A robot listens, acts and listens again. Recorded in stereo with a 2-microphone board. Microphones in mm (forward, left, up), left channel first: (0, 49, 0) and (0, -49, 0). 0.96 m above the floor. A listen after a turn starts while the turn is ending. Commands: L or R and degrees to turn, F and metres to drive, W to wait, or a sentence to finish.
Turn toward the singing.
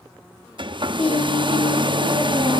L75
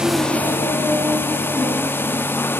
Facing the singing.